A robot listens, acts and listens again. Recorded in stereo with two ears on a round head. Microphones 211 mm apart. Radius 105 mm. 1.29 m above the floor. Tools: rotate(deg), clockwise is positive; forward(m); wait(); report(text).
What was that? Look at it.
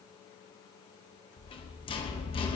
rotate(-20)
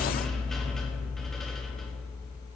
report("Found it: a rattle, straight ahead.")